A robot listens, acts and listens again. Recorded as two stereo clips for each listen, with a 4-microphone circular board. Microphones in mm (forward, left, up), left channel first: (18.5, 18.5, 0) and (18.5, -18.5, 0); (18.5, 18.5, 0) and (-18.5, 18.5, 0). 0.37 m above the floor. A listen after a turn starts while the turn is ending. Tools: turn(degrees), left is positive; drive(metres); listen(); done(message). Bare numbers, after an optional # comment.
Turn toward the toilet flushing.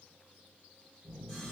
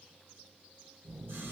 listen()
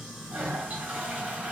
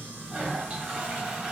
# The toilet flushing: 130° right.
turn(-130)
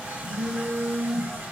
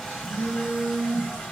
listen()
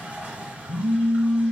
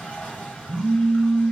listen()
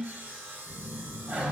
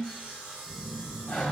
# The toilet flushing is now 50° right.
turn(-50)
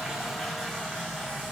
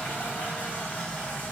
listen()
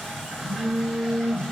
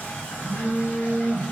listen()
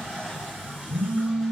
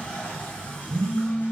done("I heard a toilet flushing from this way, but can't make it out now.")